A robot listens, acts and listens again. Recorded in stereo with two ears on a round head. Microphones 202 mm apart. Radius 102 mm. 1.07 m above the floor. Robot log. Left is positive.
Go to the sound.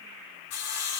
cmd yaw +90
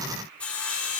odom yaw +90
cmd fwd 1.0
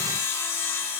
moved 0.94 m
note: The sawing is now 10° left.
cmd yaw +10
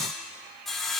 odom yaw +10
cmd fwd 1.0
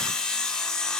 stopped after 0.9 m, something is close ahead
end: Arrived at the sawing, straight ahead.